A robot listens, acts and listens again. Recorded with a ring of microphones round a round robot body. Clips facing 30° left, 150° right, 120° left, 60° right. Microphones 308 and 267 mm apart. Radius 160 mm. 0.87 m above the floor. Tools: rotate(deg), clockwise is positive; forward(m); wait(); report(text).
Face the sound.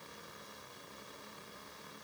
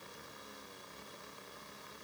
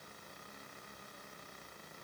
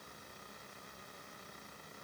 wait()
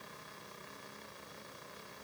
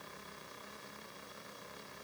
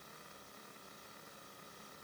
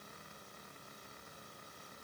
wait()
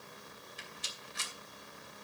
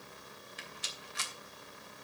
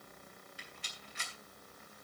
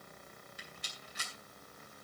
rotate(115)
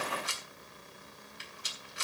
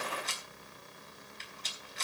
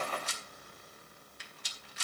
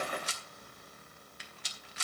rotate(50)
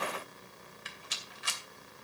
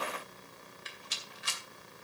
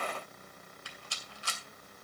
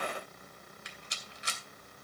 rotate(-10)
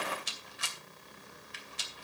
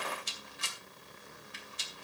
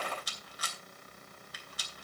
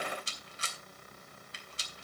report("Found it: a rattle, straight ahead, 2 to 4 m away.")